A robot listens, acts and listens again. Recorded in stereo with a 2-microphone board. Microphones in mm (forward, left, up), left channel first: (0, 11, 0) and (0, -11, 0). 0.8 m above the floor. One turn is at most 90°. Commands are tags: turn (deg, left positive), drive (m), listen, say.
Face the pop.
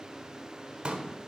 <turn deg="-50"/>
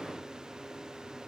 <listen/>
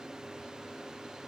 <say>I heard a pop, but can't make it out now. It was about straight ahead or 80° right.</say>